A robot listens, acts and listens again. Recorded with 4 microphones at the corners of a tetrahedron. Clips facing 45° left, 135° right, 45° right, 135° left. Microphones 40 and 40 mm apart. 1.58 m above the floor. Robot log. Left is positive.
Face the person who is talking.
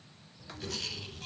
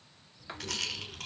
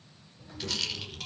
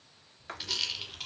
note: The child speaking: 25° right.
cmd yaw -25
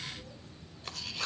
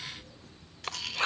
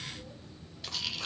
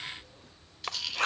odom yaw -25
note: The child speaking is now 15° right.
cmd yaw -15
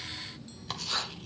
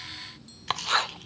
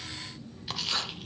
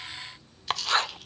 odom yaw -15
end: Facing the child speaking, 2 to 4 m away.